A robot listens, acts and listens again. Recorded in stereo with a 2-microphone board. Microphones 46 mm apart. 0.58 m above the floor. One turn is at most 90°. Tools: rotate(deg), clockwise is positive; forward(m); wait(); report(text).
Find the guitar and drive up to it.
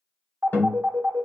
rotate(-45)
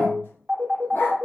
rotate(-90)
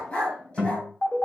rotate(15)
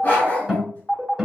forward(1.0)
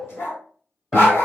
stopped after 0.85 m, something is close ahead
report("I am next to the guitar.")